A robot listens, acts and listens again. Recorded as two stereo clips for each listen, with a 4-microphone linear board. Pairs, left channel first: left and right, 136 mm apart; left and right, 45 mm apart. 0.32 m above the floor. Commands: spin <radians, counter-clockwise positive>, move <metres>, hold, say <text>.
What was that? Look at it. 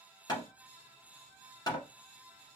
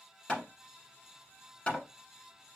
spin 0.52
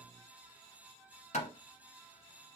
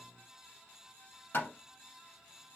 spin 2.09
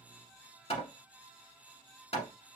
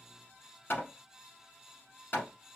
spin 0.87
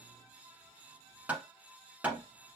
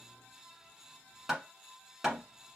spin -0.17
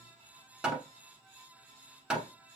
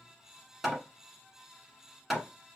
say Found it: hammering, straight ahead.